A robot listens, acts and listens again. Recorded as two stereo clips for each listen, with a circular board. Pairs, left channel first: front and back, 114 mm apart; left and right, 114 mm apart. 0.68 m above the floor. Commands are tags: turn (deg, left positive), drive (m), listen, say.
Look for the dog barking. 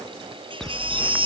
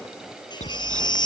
<turn deg="85"/>
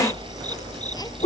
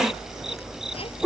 <say>Facing the dog barking.</say>